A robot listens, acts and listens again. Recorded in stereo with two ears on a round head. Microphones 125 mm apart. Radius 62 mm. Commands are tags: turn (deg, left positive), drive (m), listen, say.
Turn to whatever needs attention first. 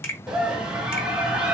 <turn deg="-30"/>
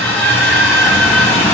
<turn deg="25"/>
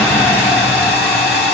<turn deg="20"/>
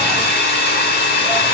<listen/>
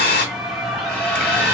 <say>Facing the scream.</say>